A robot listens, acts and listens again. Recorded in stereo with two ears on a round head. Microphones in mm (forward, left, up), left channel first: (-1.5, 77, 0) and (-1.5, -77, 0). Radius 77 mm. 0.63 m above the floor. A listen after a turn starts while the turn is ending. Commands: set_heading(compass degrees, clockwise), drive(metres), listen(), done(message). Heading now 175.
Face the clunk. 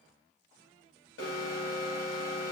listen()
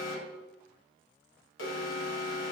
listen()
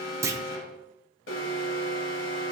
set_heading(190)
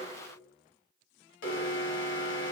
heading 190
listen()
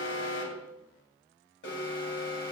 done("I heard a clunk, but can't make it out now. It was about straight ahead or 150° right.")